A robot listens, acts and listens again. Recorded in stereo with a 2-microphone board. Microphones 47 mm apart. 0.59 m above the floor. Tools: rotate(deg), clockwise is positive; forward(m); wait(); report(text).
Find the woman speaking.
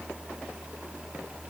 wait()
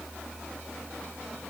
wait()
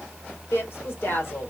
rotate(-50)
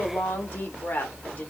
rotate(-40)
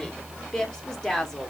rotate(-15)
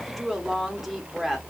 report("Found it: a woman speaking, straight ahead, 1 to 2 m away.")